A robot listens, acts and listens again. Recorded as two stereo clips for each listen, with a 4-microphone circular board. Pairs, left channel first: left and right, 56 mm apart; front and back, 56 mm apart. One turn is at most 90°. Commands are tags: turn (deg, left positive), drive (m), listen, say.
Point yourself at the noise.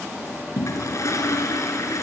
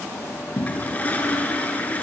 <turn deg="65"/>
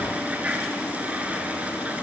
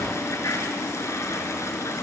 <turn deg="-25"/>
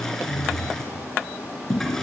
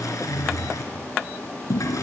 <say>Found it: a toilet flushing, straight ahead, 2 to 4 m away.</say>